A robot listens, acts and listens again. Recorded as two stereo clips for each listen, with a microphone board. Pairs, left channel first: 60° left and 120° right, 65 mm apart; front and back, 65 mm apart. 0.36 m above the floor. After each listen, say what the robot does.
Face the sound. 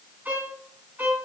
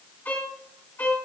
Turn 55° right.
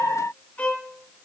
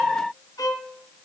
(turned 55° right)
Facing the violin, 2 to 4 m away.